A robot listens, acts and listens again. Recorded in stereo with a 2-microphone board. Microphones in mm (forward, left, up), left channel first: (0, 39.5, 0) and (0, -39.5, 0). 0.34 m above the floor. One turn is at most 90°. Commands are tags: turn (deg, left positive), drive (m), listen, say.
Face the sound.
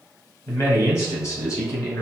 <turn deg="40"/>
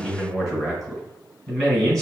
<say>Facing the man speaking.</say>